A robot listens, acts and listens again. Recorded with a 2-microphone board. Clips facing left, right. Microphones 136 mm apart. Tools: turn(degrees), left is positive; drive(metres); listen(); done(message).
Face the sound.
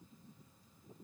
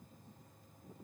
listen()
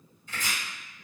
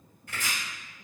turn(degrees=-70)
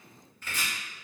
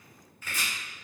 done("Facing the chopping, 1 to 2 m away.")